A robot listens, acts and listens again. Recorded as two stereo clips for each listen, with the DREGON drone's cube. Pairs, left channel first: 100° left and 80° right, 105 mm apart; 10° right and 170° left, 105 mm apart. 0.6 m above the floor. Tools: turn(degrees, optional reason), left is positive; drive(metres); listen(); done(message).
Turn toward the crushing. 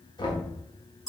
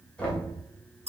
listen()
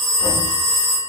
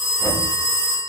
listen()
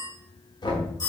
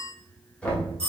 done("I can't make out crushing to turn to.")